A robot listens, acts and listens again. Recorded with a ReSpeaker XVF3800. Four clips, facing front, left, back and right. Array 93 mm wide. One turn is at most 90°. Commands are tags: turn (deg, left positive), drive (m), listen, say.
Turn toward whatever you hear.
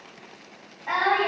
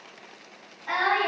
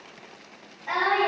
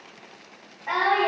<turn deg="-55"/>
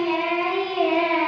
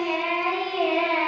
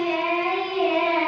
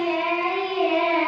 <say>Found it: singing, straight ahead.</say>